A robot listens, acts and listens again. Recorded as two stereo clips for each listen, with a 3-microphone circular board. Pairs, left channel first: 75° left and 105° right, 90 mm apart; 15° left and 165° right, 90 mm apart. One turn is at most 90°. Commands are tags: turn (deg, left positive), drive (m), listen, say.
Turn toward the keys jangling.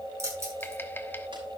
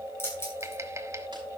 <turn deg="-45"/>
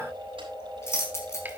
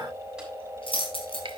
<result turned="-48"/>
<turn deg="15"/>
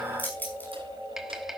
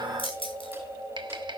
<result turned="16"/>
<say>Found it: keys jangling, straight ahead, over 4 m away.</say>